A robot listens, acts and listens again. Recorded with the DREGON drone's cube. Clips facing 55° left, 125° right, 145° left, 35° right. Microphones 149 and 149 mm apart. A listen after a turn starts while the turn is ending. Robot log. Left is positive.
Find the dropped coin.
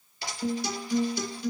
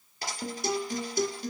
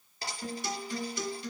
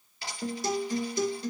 note: The dropped coin: 165° right.
cmd yaw -165
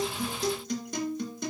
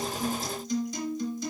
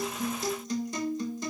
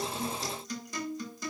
end: Facing where the dropped coin came from. I can't hear it now.